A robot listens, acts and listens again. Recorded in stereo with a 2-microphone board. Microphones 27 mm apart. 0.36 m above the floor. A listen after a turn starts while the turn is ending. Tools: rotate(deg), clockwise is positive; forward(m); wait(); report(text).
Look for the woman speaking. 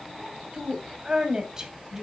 rotate(15)
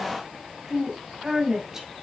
rotate(15)
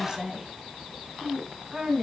rotate(15)
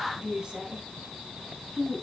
rotate(25)
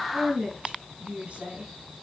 rotate(135)
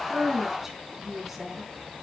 rotate(10)
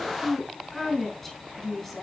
report("Facing the woman speaking.")